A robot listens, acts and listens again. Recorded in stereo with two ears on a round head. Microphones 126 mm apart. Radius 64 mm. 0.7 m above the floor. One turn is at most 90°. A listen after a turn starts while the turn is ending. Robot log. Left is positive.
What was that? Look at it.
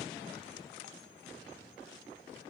cmd idle
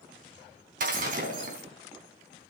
note: The breaking glass: about 60° right or 120° right.
cmd yaw -60
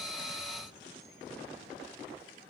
cmd idle
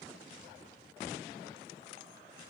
end: I heard breaking glass, but can't make it out now. It was about straight ahead or 60° right.